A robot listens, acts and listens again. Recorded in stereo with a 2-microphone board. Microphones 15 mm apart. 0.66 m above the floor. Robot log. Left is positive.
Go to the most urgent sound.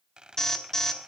note: The alarm: about 35° left or 145° left.
cmd yaw +35
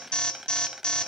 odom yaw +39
note: So it is at 105° left.
cmd yaw +105
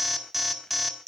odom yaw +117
note: The alarm is now 15° right.
cmd yaw -15
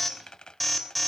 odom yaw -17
cmd fwd 1.0
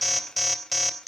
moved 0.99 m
cmd fwd 1.0
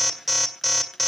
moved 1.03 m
cmd fwd 1.0
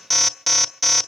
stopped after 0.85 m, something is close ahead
end: Arrived at the alarm, straight ahead.